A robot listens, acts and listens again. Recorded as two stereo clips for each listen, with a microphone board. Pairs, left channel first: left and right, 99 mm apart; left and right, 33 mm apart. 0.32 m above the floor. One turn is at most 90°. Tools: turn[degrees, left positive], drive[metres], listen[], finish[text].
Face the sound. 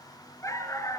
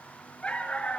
Thought: The dog barking: about 30° left or 150° left.
Action: turn[30]
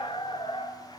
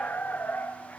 Thought: So it is at 120° left.
Action: turn[90]
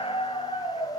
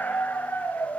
Thought: The dog barking is now 70° left.
Action: turn[70]
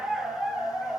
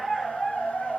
Action: finish[Facing the dog barking, 2 to 4 m away.]